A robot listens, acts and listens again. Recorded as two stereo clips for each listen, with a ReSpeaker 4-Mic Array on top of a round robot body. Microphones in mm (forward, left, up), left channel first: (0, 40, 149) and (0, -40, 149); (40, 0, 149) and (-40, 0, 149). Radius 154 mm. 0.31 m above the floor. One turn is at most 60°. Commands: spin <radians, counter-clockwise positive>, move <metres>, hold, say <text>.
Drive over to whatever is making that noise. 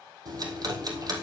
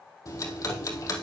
spin -0.87
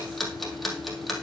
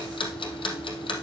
move 1.0
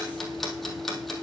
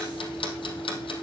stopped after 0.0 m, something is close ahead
say Blocked. The ticking is further on, straight ahead.